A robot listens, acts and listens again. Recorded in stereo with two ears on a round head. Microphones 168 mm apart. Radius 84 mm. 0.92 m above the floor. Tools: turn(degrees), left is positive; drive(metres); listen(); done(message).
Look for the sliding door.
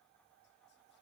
listen()
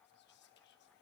listen()
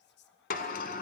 turn(degrees=50)
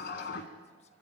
turn(degrees=70)
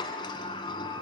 turn(degrees=30)
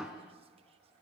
done("Facing the sliding door, 1 to 2 m away.")